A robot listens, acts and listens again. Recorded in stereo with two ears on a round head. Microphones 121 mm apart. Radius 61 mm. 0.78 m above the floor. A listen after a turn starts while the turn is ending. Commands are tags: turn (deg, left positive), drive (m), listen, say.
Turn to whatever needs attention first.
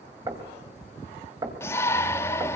<turn deg="20"/>
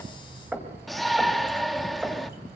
<say>Facing the shout, 1 to 2 m away.</say>